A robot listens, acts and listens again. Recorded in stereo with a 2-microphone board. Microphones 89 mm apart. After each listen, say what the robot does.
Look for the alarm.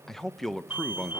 Turn 20° right.
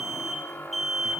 Facing the alarm, 2 to 4 m away.